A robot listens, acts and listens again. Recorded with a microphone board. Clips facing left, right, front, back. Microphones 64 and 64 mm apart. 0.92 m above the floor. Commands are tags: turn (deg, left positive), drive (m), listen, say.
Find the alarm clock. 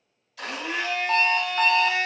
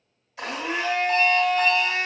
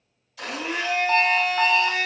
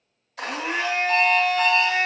<turn deg="50"/>
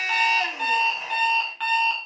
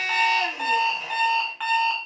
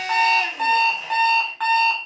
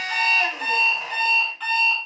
<turn deg="-10"/>
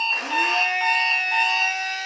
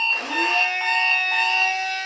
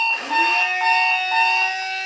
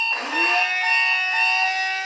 <say>Found it: an alarm clock, straight ahead, under 1 m away.</say>